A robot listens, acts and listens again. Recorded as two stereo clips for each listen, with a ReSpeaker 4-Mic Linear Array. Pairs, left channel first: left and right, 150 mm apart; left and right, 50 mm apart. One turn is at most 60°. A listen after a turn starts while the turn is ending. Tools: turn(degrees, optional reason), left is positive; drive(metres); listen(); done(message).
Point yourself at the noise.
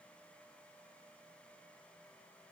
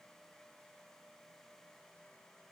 listen()
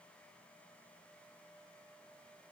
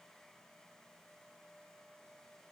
listen()
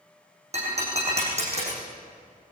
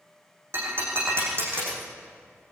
turn(degrees=-45, reason="The breaking glass: about 45° right or 135° right.")
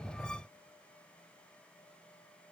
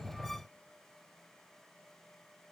listen()
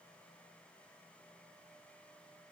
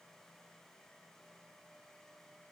done("I heard breaking glass, but can't make it out now. It was about straight ahead or 90° right.")